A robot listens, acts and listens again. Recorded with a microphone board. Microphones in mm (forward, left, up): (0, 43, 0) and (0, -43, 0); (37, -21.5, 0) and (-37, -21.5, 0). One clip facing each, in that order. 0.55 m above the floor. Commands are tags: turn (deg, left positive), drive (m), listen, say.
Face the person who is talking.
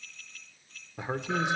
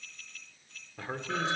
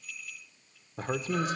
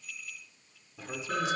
<turn deg="25"/>
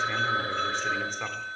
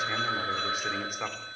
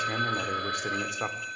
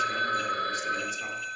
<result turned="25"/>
<turn deg="-10"/>
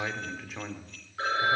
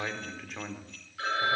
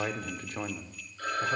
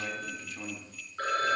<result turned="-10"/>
<say>Facing the man speaking.</say>